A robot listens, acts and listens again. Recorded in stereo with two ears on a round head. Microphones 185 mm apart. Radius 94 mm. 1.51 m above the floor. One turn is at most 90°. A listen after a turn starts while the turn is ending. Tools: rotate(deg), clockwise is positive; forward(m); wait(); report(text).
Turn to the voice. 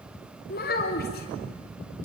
rotate(-45)
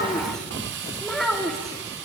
report("Found it: a child speaking, straight ahead.")